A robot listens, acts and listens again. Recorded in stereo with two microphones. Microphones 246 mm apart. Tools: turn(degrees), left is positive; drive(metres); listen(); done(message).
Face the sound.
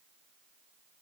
listen()
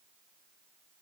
listen()
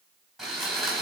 turn(degrees=30)
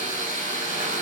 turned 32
turn(degrees=-30)
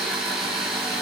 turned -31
done("Facing the sawing, over 4 m away.")